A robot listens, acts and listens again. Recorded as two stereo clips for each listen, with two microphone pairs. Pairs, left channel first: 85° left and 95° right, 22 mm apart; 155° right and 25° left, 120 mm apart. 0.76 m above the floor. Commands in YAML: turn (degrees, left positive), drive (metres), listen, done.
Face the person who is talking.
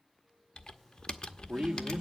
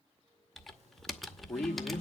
turn: -80
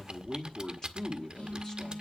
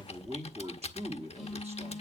turn: 20
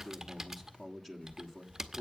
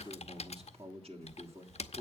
done: "Found it: a man speaking, straight ahead."